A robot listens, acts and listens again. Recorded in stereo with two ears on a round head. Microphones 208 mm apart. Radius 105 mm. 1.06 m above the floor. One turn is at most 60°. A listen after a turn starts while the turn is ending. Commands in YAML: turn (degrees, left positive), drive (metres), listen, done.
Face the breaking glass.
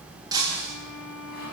turn: -15
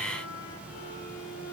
listen: true
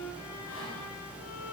done: "I heard breaking glass, but can't make it out now. It was about straight ahead or 150° right."